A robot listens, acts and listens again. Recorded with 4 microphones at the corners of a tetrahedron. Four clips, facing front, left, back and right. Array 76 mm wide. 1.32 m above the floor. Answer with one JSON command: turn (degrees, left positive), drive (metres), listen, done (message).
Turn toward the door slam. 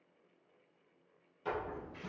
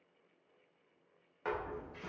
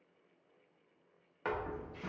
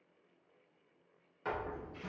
{"turn": 170}
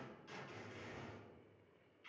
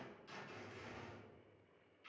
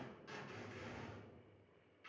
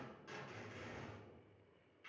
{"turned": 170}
{"done": "I heard a door slam from this way, but can't make it out now."}